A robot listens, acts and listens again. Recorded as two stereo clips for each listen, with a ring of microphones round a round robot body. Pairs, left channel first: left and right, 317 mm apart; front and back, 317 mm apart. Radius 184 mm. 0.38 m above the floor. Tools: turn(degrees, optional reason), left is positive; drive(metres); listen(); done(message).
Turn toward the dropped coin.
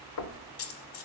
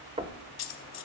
turn(degrees=40, reason="The dropped coin: 40° left.")
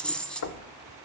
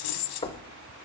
done("Found it: a dropped coin, straight ahead.")